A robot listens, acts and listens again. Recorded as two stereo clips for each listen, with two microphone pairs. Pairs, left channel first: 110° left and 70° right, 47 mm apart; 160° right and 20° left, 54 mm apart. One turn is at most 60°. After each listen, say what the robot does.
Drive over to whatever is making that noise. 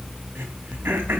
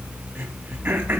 Turn 30° right.
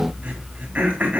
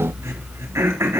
Turn 10° right.
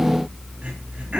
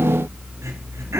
Drive 1.0 m forward.
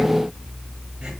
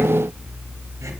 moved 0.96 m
Keep listening.
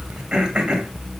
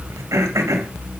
Drive 1.0 m forward.
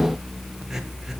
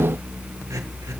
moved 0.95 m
Keep listening.
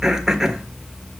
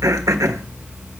Turn 10° left.
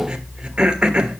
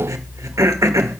Drive 1.0 m forward.
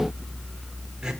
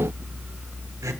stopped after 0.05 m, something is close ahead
I am next to the throat clearing.